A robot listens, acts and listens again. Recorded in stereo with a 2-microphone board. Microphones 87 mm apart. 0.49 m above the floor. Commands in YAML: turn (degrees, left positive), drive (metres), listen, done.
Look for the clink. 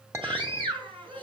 turn: -35
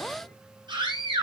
listen: true
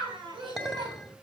done: "Found it: a clink, straight ahead."